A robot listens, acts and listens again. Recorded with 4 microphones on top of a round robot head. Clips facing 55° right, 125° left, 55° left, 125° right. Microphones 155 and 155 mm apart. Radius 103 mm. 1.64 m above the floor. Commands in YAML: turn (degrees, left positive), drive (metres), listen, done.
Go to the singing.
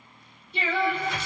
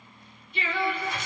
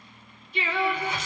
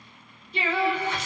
turn: -115
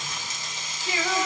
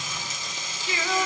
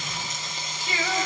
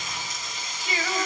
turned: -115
turn: -50
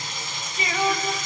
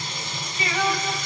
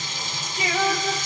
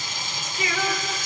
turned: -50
turn: 20
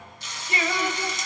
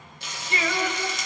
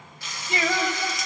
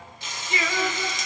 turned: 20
drive: 1.0
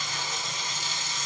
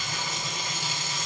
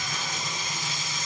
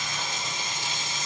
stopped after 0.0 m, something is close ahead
listen: true
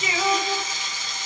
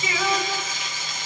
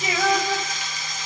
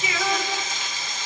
done: "Something is in my way. I am facing the singing but have not reached it."